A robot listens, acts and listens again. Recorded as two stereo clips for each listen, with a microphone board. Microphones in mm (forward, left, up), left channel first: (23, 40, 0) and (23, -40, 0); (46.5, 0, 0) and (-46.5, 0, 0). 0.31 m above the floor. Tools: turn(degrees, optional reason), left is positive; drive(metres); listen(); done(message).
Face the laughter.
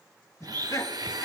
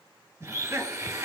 turn(degrees=120, reason="The laughter: 120° left.")
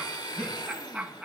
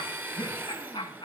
turn(degrees=-10, reason="The laughter is now 10° right.")
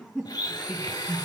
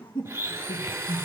turn(degrees=-10, reason="The laughter is now 10° right.")
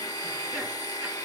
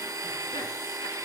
listen()
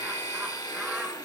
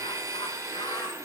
listen()
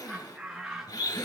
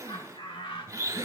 done("Found it: laughter, straight ahead.")